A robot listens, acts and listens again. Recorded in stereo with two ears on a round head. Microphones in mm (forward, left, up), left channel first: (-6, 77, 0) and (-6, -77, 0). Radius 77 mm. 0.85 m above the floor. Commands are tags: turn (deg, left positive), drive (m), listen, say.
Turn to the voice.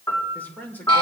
<turn deg="30"/>
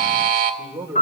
<turn deg="-20"/>
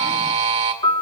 <listen/>
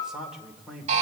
<say>Facing the man speaking, 2 to 4 m away.</say>